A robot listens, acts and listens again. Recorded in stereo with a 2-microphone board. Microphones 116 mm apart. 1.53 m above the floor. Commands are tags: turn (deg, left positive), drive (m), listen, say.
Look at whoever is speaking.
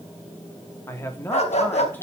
<turn deg="20"/>
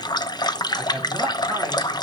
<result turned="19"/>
<listen/>
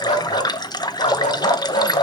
<listen/>
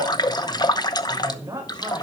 <turn deg="-25"/>
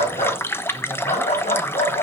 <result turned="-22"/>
<listen/>
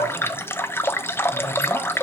<listen/>
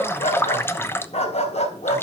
<say>I heard a man speaking from this way, but can't make it out now.</say>